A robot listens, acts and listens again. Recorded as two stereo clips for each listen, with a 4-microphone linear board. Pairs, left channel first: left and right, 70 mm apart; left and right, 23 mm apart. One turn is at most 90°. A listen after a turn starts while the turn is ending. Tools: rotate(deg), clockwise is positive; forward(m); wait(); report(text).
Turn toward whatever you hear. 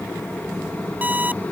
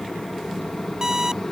rotate(25)
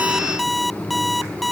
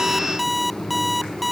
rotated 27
report("Found it: an alarm clock, straight ahead.")